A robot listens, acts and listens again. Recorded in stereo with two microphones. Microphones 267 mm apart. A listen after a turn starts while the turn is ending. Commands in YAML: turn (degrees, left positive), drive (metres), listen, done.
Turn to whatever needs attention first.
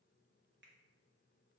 listen: true
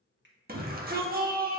turn: -35
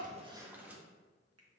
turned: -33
listen: true
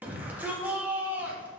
turn: -10
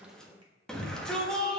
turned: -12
done: "Found it: a shout, straight ahead, 1 to 2 m away."